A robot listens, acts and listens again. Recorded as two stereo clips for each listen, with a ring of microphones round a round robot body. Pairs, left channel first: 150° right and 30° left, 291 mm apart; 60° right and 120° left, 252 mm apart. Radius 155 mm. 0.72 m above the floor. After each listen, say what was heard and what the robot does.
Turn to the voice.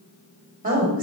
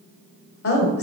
The woman speaking: 30° right. Turn 30° right.
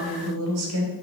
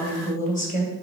Found it: a woman speaking, straight ahead, 2 to 4 m away.